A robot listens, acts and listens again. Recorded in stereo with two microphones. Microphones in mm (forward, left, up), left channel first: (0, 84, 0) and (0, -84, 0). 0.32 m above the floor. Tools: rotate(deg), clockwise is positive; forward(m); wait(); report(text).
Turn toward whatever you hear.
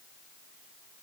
wait()
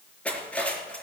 rotate(-30)
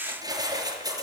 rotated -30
rotate(25)
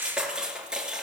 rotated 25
report("Found it: cutlery clinking, straight ahead, 2 to 4 m away.")